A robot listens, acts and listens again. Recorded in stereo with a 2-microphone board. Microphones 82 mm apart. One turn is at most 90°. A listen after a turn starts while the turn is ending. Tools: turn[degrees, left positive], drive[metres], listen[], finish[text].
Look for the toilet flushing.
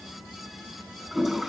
Action: turn[30]
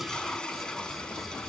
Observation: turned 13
Thought: So it is at 170° left.
Action: turn[90]
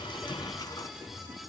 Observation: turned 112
Thought: Nothing new. It was at 55° left.
Action: turn[55]
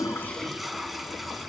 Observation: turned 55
Action: finish[Facing the toilet flushing.]